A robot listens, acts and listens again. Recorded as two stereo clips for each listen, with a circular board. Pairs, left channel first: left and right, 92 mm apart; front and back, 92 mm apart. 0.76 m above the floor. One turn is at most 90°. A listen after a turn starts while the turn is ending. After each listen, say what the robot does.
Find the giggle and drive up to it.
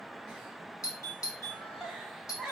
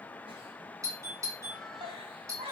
Turn 90° right.
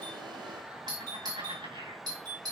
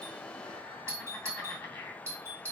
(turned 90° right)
Turn 70° right.
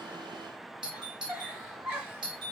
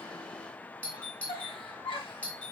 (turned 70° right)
Turn 20° right.
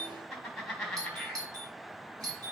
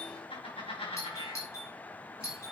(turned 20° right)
Drive 1.0 m forward.
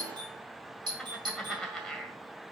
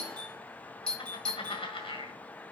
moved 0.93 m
Drive 1.0 m forward.
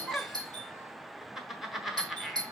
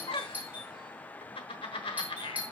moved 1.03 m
Drive 1.0 m forward.
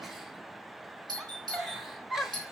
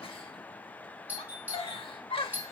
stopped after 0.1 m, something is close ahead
I am next to the giggle.